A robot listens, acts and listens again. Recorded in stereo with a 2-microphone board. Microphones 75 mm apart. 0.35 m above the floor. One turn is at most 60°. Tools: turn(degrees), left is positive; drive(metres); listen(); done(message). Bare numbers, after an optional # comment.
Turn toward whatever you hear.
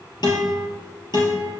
# The guitar: about 70° left or 110° left.
turn(60)
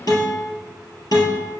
# So it is at 55° left.
turn(55)
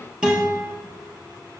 # The guitar is now 10° right.
turn(-10)
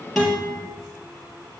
done("Found it: a guitar, straight ahead.")